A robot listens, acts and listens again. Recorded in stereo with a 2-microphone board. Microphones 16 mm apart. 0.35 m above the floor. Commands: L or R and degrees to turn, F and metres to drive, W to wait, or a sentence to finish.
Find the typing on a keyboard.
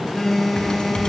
L60
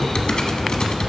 L55
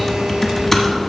L15
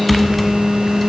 Facing the typing on a keyboard.